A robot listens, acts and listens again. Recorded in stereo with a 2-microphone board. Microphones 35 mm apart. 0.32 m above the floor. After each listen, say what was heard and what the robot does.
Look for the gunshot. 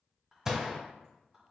The gunshot: about 20° right or 160° right. Turn 20° right.
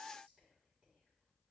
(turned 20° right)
Keep listening.
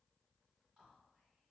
I heard a gunshot, but can't make it out now. It was about straight ahead or 140° right.